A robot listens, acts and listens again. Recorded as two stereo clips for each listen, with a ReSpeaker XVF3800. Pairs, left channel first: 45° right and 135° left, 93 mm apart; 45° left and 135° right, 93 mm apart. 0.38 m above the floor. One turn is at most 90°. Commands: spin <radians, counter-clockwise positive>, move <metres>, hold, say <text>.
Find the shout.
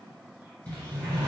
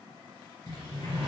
hold
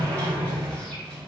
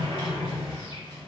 hold
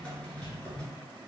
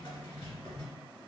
say I can't make out a shout, only a sliding door.